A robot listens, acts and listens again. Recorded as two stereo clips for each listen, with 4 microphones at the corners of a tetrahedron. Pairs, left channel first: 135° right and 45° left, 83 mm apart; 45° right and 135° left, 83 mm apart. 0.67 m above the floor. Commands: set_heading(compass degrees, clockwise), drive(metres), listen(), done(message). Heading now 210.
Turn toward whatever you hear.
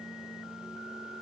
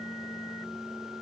listen()
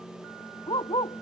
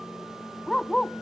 set_heading(340)
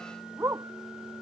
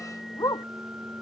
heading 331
done("Found it: a dog barking, straight ahead.")